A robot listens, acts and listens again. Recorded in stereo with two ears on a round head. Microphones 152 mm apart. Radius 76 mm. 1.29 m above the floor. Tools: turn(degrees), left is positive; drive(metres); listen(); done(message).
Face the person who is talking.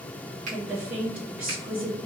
turn(degrees=-30)
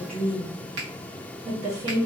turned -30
turn(degrees=-140)
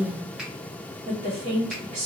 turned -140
turn(degrees=-45)
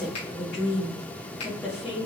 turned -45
done("Facing the woman speaking, 1 to 2 m away.")